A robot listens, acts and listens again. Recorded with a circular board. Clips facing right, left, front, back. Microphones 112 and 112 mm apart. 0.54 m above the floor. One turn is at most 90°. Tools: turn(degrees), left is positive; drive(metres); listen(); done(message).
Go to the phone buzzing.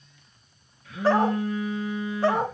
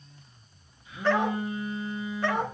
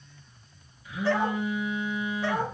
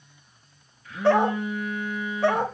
turn(degrees=-80)
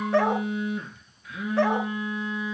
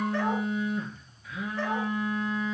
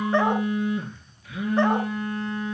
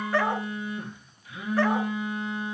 drive(metres=1.0)
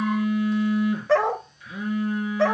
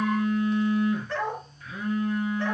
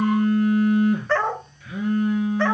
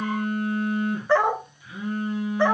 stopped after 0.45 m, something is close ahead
done("Blocked. The phone buzzing is further on, straight ahead.")